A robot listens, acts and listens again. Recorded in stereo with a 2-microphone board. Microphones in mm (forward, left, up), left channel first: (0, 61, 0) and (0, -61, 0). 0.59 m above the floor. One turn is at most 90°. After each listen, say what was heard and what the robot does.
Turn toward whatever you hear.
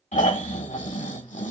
Turn 90° left.
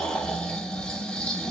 Found it: snoring, straight ahead, under 1 m away.